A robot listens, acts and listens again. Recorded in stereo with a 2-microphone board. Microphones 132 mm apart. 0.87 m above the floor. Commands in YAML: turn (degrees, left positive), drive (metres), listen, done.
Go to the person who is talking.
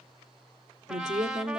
turn: -60
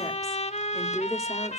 drive: 1.0
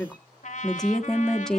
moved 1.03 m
drive: 1.0
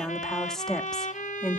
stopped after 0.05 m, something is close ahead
done: "Arrived at the woman speaking, straight ahead."